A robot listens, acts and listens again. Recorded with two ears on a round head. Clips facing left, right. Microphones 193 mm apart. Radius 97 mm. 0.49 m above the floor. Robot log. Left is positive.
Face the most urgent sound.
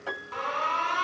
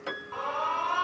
note: The alarm: about 30° left or 150° left.
cmd yaw +30
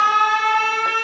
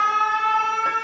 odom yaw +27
note: So it is at 120° left.
cmd yaw +120
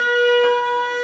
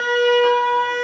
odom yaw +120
end: Found it: an alarm, straight ahead.